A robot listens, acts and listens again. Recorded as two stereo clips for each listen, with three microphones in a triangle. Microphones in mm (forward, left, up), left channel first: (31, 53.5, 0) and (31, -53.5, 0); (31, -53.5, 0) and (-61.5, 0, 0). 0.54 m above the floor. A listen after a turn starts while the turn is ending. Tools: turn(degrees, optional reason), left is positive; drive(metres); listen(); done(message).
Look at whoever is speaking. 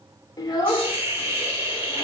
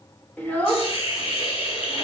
turn(degrees=40, reason="The child speaking: 40° left.")
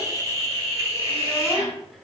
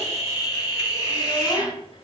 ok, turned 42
listen()
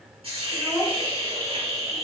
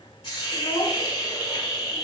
done("Found it: a child speaking, straight ahead, under 1 m away.")